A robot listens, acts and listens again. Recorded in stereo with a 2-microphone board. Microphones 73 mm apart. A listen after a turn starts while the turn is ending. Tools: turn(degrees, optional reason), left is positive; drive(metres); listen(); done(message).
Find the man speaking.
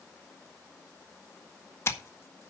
listen()
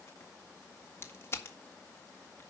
listen()
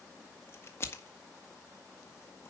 done("I can't make out a man speaking, only scissors.")